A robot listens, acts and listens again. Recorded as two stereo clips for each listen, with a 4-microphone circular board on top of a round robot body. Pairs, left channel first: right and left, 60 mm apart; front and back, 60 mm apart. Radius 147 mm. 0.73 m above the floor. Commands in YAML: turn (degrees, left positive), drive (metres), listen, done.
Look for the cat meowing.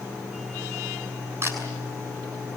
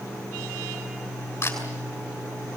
listen: true
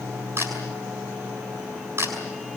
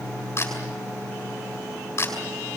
listen: true
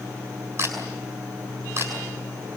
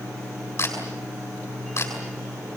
done: "I can't make out a cat meowing, only a camera shutter."